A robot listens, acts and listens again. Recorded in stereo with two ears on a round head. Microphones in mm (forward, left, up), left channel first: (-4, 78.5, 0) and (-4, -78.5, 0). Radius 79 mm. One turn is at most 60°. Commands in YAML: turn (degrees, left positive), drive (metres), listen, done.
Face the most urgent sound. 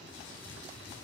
listen: true
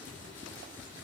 listen: true
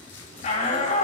turn: 45
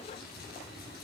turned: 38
listen: true
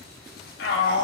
turn: 60
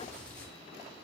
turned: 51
turn: 40
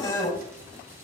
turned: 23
turn: 20
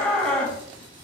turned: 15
done: "Found it: a shout, straight ahead."